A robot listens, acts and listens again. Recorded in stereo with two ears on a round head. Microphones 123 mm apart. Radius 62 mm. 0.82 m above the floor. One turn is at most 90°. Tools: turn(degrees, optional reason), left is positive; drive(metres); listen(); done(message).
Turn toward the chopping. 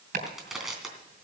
turn(degrees=-75, reason="The chopping: about 75° right or 105° right.")
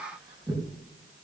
turn(degrees=-30, reason="So it is at 30° right.")
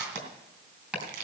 done("Facing the chopping.")